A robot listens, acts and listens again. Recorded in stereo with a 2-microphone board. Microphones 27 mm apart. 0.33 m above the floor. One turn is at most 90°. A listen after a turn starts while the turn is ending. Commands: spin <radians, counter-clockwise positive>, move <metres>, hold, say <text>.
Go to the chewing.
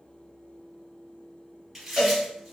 spin -0.52
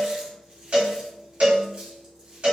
hold
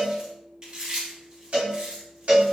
spin -1.57
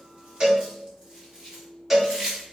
spin -0.79
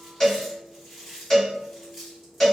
spin -0.17
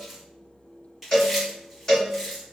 move 1.0
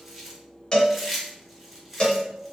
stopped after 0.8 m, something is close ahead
spin -0.17
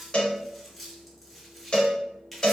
say Arrived at the chewing, straight ahead.